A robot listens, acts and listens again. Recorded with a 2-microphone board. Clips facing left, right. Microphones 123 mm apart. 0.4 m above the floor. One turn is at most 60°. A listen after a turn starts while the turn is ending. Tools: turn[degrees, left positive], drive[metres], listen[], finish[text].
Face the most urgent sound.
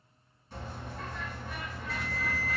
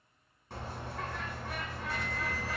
Thought: The alarm: about 65° left or 115° left.
Action: turn[60]
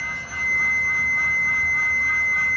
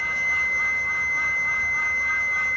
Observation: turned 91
Action: finish[Facing the alarm, 1 to 2 m away.]